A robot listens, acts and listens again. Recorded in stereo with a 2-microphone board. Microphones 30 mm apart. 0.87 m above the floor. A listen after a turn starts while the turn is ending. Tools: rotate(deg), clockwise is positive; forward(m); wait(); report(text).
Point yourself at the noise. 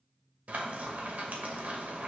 rotate(70)
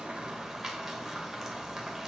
rotate(15)
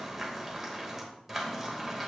report("Facing the frying.")